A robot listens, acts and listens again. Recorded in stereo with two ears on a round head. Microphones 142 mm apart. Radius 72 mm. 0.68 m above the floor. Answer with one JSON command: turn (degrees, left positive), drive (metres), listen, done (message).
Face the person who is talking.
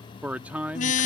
{"turn": -30}
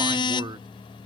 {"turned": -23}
{"turn": -145}
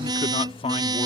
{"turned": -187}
{"turn": 40}
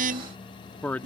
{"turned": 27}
{"turn": 10}
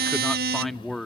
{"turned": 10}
{"done": "Found it: a man speaking, straight ahead."}